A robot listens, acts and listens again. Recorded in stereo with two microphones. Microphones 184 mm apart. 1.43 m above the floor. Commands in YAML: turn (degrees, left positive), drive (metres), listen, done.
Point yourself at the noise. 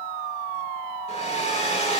turn: 40
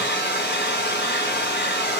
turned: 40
turn: 100
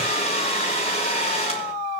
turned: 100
turn: 35
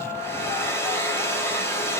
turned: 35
turn: 15
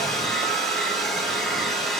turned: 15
done: "Found it: a hair dryer, straight ahead, over 4 m away."